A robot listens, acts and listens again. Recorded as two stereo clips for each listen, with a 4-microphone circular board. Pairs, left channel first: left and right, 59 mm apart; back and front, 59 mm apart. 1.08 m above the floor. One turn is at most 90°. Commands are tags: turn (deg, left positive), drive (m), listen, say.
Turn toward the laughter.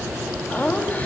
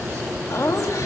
<turn deg="90"/>
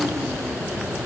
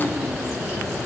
<turn deg="60"/>
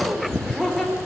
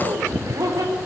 <say>Facing the laughter.</say>